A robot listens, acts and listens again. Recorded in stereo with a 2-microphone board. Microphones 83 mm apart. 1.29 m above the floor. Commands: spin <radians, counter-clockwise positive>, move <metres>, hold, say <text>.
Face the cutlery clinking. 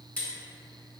spin 0.26
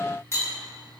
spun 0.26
spin 2.62
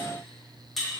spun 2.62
say Found it: cutlery clinking, straight ahead.